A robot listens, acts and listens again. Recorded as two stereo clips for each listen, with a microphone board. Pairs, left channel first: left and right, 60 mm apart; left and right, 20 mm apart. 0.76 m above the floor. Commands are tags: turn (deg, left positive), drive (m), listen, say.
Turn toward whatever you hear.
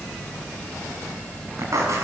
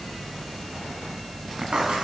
<turn deg="-55"/>
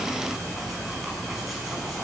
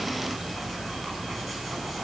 <listen/>
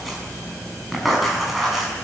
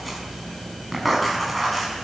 <say>Facing the writing.</say>